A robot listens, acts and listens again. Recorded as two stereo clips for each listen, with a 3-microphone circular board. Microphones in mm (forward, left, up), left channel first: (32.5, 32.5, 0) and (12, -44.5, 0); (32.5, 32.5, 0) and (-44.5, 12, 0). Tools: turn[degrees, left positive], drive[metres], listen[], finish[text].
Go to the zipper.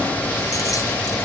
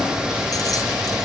Action: listen[]
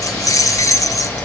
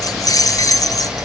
Action: listen[]
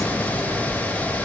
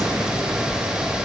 Action: finish[I can't make out a zipper to turn to.]